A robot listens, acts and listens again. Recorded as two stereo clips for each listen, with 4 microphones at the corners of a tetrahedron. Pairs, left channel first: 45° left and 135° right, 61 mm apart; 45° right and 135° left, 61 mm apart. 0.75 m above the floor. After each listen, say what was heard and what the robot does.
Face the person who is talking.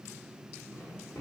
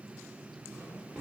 Keep listening.
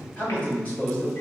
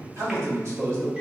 The man speaking: 110° left. Turn 110° left.
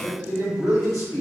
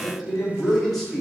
The man speaking is now 40° left. Turn 40° left.
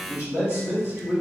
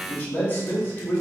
The man speaking is now 10° left. Turn 10° left.
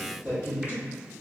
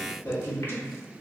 Found it: a man speaking, straight ahead.